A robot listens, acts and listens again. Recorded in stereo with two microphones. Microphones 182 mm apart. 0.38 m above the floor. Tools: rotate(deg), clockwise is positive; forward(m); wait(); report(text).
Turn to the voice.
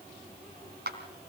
wait()
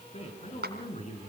rotate(-35)
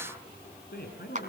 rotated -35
rotate(-105)
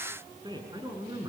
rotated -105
rotate(25)
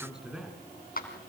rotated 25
report("Found it: a man speaking, straight ahead, over 4 m away.")